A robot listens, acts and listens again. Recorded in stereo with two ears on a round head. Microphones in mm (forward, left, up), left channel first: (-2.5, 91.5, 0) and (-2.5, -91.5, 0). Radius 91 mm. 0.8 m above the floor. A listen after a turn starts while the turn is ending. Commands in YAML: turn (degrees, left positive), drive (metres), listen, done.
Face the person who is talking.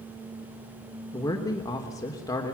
turn: 15
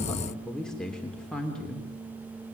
done: "Facing the man speaking, 2 to 4 m away."